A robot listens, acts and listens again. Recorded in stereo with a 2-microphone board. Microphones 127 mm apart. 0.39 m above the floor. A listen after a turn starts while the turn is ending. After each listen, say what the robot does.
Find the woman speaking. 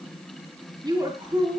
Turn 35° right.
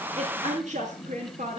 Turn 105° right.
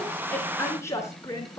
Turn 25° left.
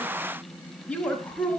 Turn 10° left.
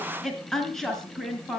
Found it: a woman speaking, straight ahead.